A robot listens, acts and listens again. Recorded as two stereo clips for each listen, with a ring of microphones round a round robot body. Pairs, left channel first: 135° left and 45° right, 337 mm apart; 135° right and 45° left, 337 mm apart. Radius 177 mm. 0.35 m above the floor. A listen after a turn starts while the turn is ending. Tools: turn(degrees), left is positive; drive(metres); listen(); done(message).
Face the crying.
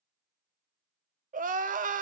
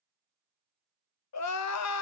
turn(degrees=-105)
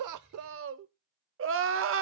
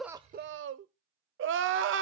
done("Found it: crying, straight ahead.")